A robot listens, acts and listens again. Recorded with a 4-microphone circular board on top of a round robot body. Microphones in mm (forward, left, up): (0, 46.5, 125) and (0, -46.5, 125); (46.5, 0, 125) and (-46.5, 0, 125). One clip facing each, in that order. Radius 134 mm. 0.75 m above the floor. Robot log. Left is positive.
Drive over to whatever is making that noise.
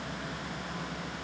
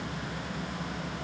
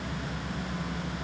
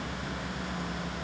cmd idle
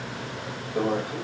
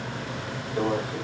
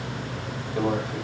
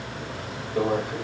note: The microwave: 130° left.
cmd yaw +130
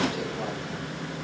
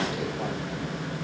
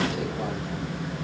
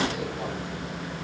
cmd idle
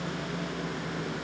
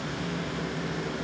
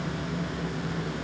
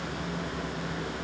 cmd idle
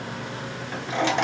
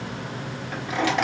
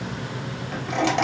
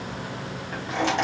note: The microwave is now 25° left.
cmd yaw +25
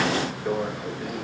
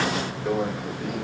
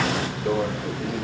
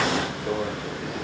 cmd fwd 1.0
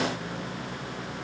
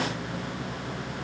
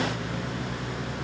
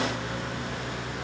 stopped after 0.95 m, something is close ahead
cmd idle
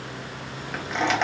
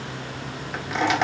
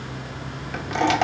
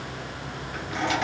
end: Arrived at the microwave, straight ahead.